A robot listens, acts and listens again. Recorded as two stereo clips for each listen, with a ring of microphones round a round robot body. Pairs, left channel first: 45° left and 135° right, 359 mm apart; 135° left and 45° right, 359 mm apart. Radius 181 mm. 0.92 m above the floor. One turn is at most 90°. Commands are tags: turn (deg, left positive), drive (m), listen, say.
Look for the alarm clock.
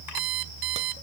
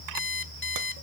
<turn deg="-90"/>
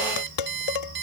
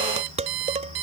<turn deg="-75"/>
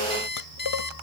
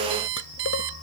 <turn deg="-20"/>
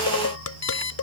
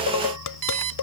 <say>Found it: an alarm clock, straight ahead.</say>